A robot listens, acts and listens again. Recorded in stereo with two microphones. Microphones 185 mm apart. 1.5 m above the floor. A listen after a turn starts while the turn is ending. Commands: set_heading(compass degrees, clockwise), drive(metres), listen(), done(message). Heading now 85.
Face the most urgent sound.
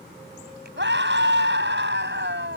set_heading(175)
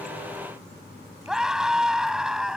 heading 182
done("Found it: a scream, straight ahead.")